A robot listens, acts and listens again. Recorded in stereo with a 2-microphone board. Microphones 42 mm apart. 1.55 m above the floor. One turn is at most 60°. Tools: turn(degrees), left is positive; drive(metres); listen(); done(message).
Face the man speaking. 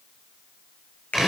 listen()
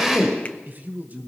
turn(degrees=-40)
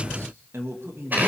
turn(degrees=-60)
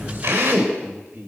turn(degrees=-50)
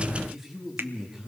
turn(degrees=-10)
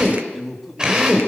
done("Facing the man speaking, over 4 m away.")